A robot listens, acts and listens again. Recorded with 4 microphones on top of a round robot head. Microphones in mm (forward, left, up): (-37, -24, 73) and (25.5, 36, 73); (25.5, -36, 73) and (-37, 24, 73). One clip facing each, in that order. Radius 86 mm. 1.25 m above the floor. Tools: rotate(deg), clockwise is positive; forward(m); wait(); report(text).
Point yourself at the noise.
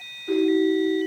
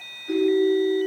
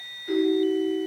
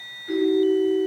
rotate(115)
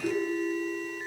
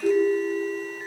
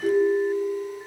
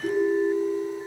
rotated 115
report("Facing the ringtone.")